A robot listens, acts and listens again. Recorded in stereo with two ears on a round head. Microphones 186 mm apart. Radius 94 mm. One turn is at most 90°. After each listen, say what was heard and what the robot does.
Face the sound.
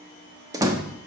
The door slam: about 15° right or 165° right. Turn 15° right.
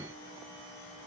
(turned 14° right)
Keep listening.
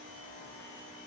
I heard a door slam, but can't make it out now. It was about straight ahead or 150° right.